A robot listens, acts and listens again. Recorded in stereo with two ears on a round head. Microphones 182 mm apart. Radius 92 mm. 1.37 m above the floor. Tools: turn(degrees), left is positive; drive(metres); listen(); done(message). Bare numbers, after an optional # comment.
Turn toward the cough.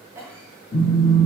turn(-30)
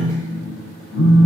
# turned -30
listen()
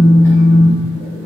listen()
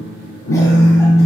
done("I heard a cough, but can't make it out now. It was about 15° left or 135° right.")